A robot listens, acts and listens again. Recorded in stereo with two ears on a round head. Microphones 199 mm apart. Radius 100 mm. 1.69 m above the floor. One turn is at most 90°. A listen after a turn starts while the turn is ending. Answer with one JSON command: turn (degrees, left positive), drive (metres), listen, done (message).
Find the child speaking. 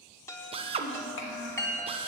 {"turn": 60}
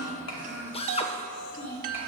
{"turn": 40}
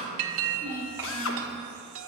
{"turn": -15}
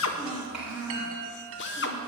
{"done": "Found it: a child speaking, straight ahead, over 4 m away."}